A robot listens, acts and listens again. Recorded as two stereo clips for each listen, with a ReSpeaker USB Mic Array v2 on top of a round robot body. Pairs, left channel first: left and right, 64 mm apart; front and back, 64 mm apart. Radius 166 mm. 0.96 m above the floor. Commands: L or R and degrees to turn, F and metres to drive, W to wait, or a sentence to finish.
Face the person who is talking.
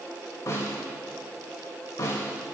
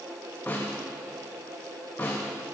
W
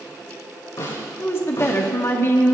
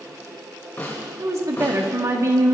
L140
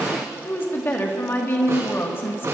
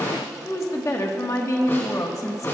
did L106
L35
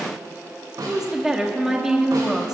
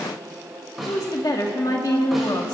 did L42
R10
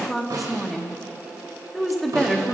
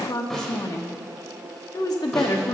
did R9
Found it: a woman speaking, straight ahead.